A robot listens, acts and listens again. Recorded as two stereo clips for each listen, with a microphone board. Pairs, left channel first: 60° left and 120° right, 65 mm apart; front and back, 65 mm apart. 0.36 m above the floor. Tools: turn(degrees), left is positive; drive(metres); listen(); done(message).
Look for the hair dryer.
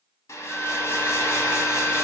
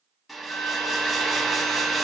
turn(degrees=90)
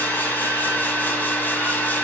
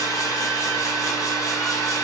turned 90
done("Facing the hair dryer, 1 to 2 m away.")